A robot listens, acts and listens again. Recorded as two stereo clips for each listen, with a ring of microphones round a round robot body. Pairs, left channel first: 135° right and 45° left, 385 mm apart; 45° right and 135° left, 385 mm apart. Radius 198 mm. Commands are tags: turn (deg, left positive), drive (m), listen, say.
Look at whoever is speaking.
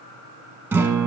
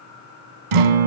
<listen/>
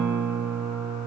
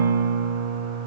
<listen/>
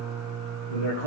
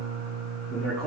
<turn deg="-135"/>
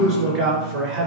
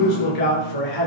<turn deg="-15"/>
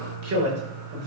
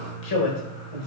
<turn deg="-10"/>
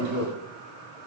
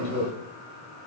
<say>Facing the man speaking.</say>